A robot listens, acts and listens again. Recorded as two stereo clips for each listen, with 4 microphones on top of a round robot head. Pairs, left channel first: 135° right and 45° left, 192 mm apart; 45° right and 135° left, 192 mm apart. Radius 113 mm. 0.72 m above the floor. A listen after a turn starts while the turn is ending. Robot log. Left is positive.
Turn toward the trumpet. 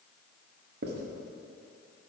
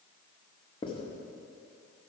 cmd idle
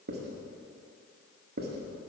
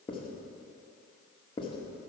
cmd idle
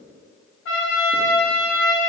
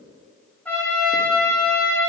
note: The trumpet: 130° right.
cmd yaw -130
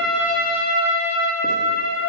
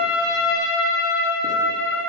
note: The trumpet is now 10° right.
cmd yaw -10
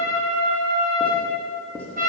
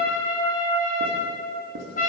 end: Found it: a trumpet, straight ahead, 2 to 4 m away.